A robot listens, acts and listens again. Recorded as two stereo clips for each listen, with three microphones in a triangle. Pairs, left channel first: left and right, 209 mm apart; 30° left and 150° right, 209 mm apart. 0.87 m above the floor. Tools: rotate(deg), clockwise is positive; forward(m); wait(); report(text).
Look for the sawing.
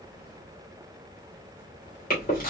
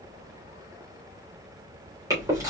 wait()
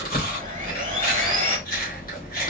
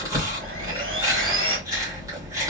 rotate(140)
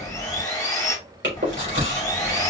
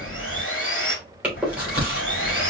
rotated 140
rotate(-20)
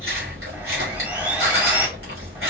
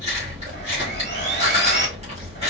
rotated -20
report("Facing the sawing, 2 to 4 m away.")